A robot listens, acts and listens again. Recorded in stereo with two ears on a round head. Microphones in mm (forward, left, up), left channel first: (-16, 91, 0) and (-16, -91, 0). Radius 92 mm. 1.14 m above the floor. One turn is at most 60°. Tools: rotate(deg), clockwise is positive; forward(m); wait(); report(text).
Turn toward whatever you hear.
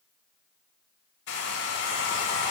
rotate(-55)
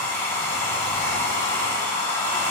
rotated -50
rotate(-10)
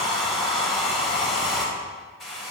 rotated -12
report("Facing the hair dryer.")